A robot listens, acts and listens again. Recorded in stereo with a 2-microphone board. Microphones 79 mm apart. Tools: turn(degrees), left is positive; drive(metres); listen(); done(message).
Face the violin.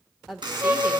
turn(degrees=-30)
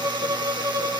turn(degrees=-110)
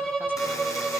turn(degrees=10)
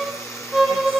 done("Found it: a violin, straight ahead.")